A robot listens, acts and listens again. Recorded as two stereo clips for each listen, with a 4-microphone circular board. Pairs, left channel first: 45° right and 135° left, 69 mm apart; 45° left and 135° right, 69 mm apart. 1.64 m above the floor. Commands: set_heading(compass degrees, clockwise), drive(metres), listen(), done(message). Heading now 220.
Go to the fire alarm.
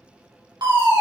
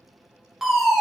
set_heading(80)
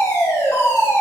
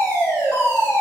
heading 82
drive(1.0)
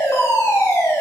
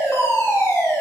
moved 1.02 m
drive(1.0)
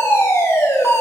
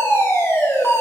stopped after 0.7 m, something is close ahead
done("I am next to the fire alarm.")